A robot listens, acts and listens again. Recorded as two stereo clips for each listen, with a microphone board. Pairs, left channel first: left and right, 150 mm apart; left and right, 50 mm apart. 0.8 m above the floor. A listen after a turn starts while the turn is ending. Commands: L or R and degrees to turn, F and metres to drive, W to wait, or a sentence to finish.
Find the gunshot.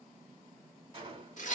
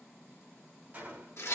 R30
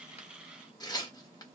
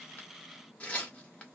W
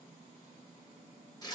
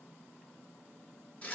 I heard a gunshot, but can't make it out now. It was about straight ahead or 120° right.